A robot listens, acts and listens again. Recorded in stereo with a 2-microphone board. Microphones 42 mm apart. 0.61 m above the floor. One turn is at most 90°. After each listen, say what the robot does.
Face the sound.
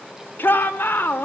Turn 60° left.
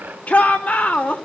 Turn 45° left.
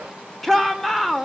Turn 10° left.
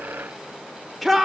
Facing the shout, 2 to 4 m away.